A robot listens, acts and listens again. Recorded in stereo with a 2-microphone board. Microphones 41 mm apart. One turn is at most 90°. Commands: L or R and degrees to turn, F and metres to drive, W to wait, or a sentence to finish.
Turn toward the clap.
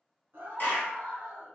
L50
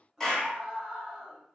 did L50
L10
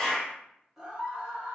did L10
Found it: a clap, straight ahead, 1 to 2 m away.